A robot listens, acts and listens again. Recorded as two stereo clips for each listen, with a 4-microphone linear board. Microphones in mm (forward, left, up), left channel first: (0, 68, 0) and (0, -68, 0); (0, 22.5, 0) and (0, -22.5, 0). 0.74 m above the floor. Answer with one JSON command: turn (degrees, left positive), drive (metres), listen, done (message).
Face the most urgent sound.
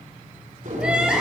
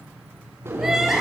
{"turn": -30}
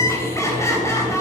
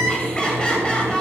{"turn": 20}
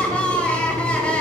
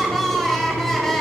{"turn": 10}
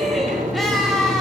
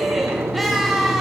{"done": "Facing the crying."}